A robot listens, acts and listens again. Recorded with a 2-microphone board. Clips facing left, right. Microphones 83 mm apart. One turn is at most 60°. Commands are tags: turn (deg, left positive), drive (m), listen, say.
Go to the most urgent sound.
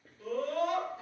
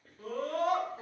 <turn deg="-60"/>
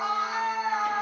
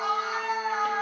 <drive m="1.0"/>
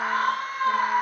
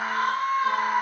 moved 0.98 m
<turn deg="-10"/>
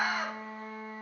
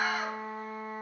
<drive m="1.0"/>
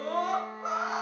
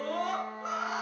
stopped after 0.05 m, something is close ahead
<turn deg="10"/>
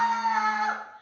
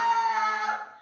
<say>Arrived at the scream, straight ahead.</say>